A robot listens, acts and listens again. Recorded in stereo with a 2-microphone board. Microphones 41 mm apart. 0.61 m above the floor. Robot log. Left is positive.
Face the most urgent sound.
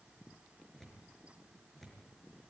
cmd idle
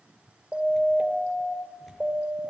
note: The siren: about 35° right or 145° right.
cmd yaw -35
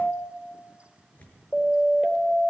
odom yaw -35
end: Found it: a siren, straight ahead, 2 to 4 m away.